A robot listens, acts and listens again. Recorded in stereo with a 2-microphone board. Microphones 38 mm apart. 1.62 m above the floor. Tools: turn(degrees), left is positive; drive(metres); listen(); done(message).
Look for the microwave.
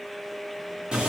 listen()
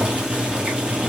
listen()
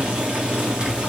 done("I can't make out a microwave to turn to.")